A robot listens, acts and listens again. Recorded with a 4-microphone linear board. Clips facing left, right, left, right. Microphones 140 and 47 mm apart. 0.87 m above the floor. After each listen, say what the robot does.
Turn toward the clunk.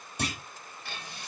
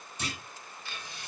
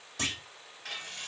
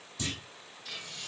Turn 65° left.
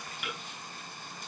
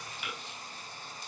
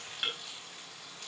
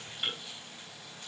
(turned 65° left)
Keep listening.
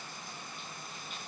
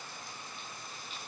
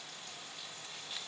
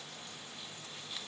I heard a clunk, but can't make it out now. It was about straight ahead or 50° left.